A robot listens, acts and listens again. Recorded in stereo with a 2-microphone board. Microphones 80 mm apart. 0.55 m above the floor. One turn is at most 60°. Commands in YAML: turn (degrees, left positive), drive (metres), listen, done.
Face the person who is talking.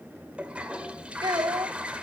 turn: -60
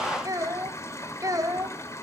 turn: -50
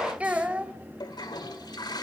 turn: -20
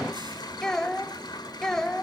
done: "Found it: a child speaking, straight ahead, 1 to 2 m away."